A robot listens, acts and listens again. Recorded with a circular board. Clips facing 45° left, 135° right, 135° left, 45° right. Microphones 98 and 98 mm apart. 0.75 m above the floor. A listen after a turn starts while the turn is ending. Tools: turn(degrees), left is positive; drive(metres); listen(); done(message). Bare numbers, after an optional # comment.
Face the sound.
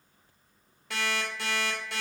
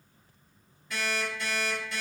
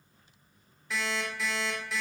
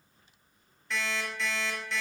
# The alarm clock: 50° left.
turn(50)
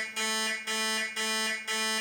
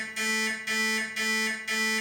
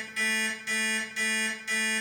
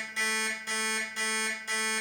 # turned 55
done("Found it: an alarm clock, straight ahead, under 1 m away.")